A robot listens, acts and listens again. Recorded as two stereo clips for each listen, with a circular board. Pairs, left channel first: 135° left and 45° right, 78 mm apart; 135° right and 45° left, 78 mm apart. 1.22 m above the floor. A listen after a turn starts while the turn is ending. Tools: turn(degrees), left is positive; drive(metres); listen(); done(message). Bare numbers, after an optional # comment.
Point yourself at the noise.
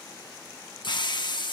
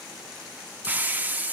# The hiss: 115° left.
turn(115)
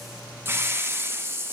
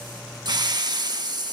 # The hiss is now 15° left.
turn(15)
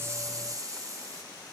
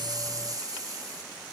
done("Facing the hiss, 1 to 2 m away.")